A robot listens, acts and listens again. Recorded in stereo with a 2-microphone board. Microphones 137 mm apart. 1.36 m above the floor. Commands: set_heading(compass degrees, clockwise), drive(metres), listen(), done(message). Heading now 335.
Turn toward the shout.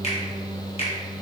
listen()
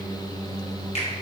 listen()
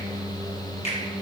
done("I can't make out a shout, only a finger snap.")